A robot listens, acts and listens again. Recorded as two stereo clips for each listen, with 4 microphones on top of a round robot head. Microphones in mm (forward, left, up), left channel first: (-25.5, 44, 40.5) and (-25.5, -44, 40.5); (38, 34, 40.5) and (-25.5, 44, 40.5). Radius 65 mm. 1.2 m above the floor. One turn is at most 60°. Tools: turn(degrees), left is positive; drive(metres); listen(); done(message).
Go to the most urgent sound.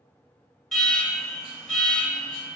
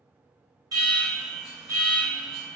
turn(degrees=60)
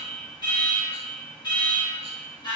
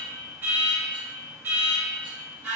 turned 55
turn(degrees=60)
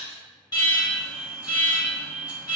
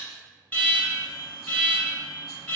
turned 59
turn(degrees=60)
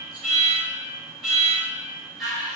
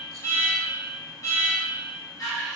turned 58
drive(metres=1.0)
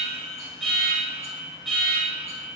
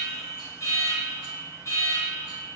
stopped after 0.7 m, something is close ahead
done("Arrived at the alarm, straight ahead.")